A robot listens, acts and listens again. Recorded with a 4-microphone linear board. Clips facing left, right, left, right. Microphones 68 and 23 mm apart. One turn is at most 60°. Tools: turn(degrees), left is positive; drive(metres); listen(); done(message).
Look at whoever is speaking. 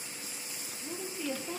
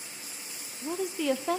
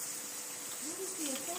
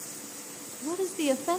turn(degrees=-60)
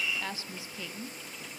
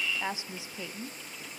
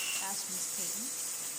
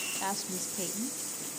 turn(degrees=-20)
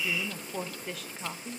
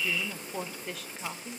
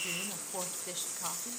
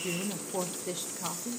done("Found it: a woman speaking, straight ahead.")